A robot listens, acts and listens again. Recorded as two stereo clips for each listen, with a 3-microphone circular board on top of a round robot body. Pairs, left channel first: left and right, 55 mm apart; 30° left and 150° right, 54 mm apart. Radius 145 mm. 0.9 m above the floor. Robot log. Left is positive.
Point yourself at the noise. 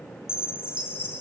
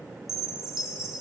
note: The chime: 125° left.
cmd yaw +125
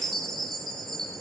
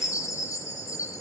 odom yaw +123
end: Facing the chime, 2 to 4 m away.